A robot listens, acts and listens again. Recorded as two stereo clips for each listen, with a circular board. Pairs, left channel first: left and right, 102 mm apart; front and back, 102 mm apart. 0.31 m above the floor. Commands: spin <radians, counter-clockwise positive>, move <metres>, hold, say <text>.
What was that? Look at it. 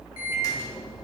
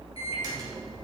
spin 2.44
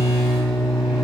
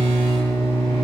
say Found it: a microwave, straight ahead.